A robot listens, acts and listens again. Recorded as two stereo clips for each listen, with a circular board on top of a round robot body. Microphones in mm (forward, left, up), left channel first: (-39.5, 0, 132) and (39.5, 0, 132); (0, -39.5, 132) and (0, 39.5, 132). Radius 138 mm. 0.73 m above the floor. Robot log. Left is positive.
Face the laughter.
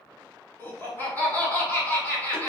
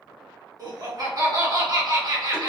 note: The laughter: 115° left.
cmd yaw +115
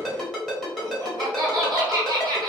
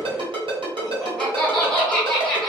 note: The laughter is now 10° right.
cmd yaw -10
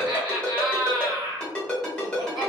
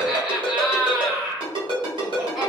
end: Facing the laughter, 1 to 2 m away.